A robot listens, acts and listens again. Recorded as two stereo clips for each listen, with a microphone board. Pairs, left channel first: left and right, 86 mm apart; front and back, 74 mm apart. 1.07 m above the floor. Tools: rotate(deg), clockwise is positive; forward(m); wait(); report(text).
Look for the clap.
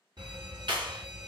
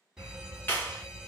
rotate(65)
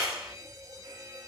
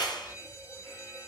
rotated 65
report("Found it: a clap, straight ahead.")